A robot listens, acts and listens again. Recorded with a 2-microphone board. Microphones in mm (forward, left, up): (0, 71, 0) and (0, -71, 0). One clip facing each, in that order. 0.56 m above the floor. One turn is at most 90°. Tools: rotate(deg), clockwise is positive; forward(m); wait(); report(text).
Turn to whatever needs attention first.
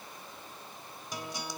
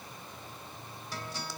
wait()
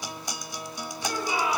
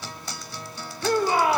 rotate(60)
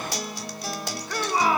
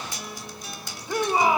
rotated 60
rotate(20)
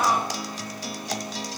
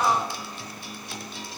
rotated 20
report("Found it: a shout, straight ahead.")